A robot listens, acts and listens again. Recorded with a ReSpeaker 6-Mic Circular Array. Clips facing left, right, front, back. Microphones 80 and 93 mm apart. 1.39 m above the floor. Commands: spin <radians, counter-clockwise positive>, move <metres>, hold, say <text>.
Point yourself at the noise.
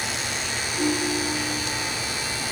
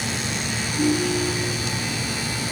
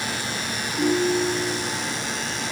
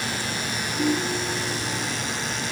spin 0.26
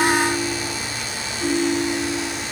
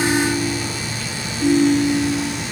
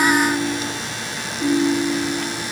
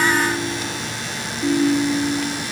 say Found it: a ringtone, straight ahead, 2 to 4 m away.